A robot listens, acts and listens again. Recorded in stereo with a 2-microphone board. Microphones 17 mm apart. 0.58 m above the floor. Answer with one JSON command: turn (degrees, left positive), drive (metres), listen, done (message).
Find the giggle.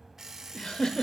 {"turn": 55}
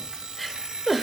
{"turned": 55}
{"done": "Facing the giggle."}